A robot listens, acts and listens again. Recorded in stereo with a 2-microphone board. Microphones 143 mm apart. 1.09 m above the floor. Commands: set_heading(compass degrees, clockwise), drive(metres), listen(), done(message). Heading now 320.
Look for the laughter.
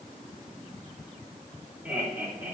set_heading(350)
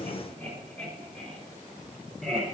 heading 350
done("Facing the laughter.")